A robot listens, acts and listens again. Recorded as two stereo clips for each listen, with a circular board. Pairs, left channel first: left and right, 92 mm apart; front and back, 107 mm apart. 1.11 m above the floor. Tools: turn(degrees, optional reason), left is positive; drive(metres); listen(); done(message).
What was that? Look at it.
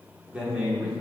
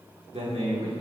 turn(degrees=-165, reason="The man speaking: 165° right.")
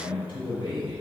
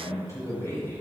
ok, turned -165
turn(degrees=65, reason="The man speaking is now 65° left.")
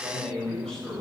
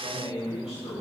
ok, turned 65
turn(degrees=10, reason="The man speaking is now 10° left.")
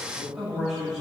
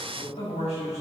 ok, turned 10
done("Found it: a man speaking, straight ahead.")